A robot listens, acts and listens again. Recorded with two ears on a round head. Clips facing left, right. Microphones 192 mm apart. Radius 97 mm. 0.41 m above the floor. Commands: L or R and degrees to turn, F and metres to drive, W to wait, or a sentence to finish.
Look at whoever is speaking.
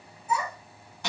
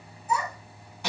R40
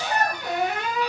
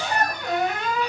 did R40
Facing the child speaking, 2 to 4 m away.